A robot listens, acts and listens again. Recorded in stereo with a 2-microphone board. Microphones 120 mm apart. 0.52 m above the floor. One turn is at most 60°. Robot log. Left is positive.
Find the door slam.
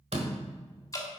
note: The door slam: about 60° right or 120° right.
cmd yaw -60
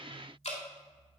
cmd idle
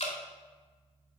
end: I heard a door slam, but can't make it out now. It was about straight ahead or 60° right.